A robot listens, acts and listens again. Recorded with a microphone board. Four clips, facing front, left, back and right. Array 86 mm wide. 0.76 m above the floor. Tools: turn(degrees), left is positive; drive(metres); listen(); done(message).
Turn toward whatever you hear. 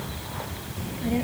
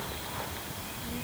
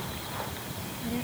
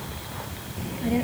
turn(degrees=-65)
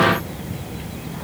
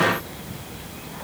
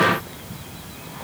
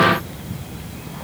done("Found it: a child speaking, straight ahead.")